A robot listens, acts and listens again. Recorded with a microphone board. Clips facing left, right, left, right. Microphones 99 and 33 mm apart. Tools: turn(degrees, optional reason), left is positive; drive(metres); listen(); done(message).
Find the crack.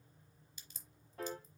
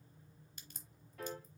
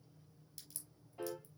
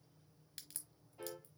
turn(degrees=-55, reason="The crack: about 55° right or 125° right.")
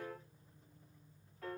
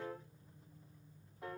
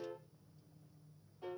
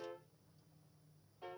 listen()
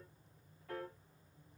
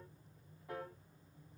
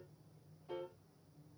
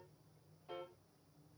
done("I heard a crack, but can't make it out now. It was about straight ahead or 70° right.")